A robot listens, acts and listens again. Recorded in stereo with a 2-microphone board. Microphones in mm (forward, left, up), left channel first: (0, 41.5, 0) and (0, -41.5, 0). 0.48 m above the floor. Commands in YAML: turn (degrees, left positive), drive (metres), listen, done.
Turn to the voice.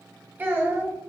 turn: -25
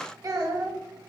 turn: -130
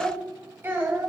turn: -25
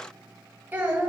turn: -20
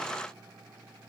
listen: true
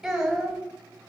done: "Found it: a child speaking, straight ahead."